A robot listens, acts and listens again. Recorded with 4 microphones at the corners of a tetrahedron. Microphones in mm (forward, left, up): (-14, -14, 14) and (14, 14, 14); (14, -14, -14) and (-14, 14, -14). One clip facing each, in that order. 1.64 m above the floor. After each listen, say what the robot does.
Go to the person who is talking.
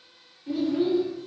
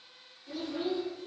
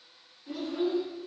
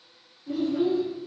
Turn 80° right.
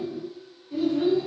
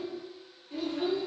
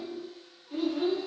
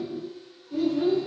Drive 1.0 m forward.
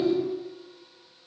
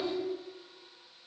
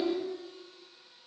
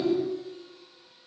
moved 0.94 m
Drive 1.0 m forward.
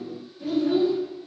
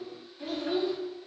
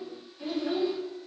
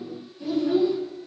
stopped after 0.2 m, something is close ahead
I am next to the child speaking.